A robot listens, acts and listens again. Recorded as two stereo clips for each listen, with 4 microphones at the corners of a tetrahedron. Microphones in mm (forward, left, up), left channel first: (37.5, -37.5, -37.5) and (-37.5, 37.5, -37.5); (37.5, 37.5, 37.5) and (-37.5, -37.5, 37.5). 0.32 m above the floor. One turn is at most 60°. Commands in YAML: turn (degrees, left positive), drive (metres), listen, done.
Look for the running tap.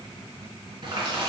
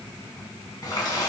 turn: 60
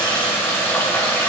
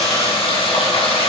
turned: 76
turn: 20
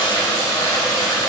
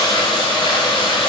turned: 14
done: "Facing the running tap."